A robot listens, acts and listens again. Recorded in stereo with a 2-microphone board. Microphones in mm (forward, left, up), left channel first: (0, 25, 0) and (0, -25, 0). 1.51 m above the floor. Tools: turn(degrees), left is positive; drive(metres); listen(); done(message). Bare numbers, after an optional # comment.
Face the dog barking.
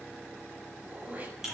listen()
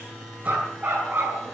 # The dog barking: about 40° right or 140° right.
turn(-40)
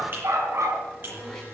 # So it is at 110° right.
turn(-110)
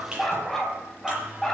done("Found it: a dog barking, straight ahead, over 4 m away.")